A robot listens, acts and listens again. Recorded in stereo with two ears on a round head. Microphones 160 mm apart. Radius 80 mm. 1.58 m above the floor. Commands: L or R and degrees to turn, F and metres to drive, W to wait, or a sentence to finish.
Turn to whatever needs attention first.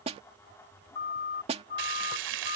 L50
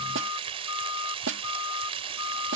L80
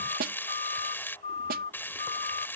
L35
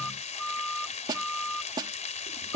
Facing the siren.